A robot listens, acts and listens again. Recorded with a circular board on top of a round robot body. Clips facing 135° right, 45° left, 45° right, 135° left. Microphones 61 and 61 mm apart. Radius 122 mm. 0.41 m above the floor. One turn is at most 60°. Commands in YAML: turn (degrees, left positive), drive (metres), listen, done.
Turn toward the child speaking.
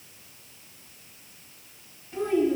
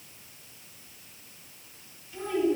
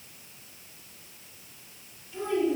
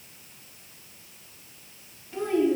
turn: 60
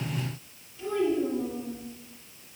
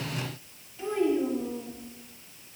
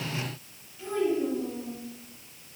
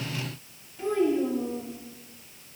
turn: 60
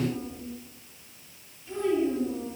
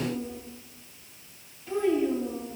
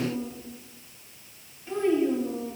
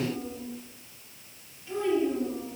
done: "Found it: a child speaking, straight ahead, over 4 m away."